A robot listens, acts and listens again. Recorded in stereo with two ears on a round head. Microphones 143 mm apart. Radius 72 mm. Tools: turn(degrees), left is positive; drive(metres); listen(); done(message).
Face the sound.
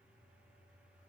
listen()
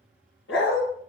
turn(degrees=90)
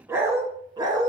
turn(degrees=-30)
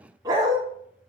turn(degrees=-30)
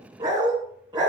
turn(degrees=-25)
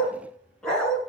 done("Found it: a dog barking, straight ahead, 1 to 2 m away.")